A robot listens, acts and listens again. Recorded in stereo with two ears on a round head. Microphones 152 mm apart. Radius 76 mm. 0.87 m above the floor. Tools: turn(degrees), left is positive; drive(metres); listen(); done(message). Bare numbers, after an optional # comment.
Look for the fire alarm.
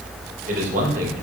listen()
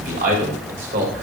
listen()
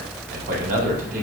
done("I can't make out a fire alarm to turn to.")